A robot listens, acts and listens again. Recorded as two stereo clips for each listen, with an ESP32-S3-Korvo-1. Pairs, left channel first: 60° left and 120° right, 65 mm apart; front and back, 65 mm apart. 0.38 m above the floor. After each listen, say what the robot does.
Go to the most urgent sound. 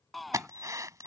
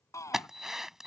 Turn 30° right.
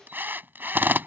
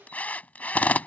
Keep listening.
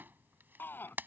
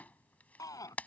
Drive 1.0 m forward.
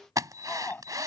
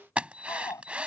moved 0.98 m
Drive 1.0 m forward.
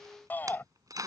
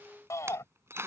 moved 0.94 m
Turn 10° left.
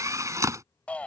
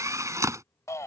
Drive 1.0 m forward.
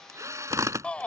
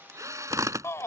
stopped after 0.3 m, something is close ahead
I am next to the shout.